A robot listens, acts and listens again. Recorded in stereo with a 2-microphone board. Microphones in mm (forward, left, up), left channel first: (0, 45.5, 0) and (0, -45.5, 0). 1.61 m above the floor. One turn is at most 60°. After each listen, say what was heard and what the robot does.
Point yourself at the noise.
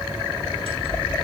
Turn 60° left.
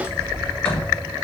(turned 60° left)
So it is at 20° left. Turn 20° left.
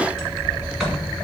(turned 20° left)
Facing the sliding door.